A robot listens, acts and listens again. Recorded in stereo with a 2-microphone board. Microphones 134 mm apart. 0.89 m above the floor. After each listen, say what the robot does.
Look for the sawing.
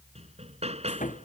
Turn 90° left.
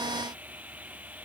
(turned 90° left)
Turn 10° right.
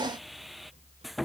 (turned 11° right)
Facing the sawing.